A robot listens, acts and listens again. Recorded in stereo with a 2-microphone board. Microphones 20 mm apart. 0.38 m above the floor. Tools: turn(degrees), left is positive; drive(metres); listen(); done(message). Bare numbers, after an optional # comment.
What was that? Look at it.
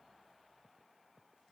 listen()
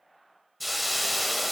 turn(30)
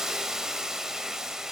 # So it is at 30° right.
turn(-30)
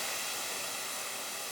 done("Found it: a hiss, straight ahead.")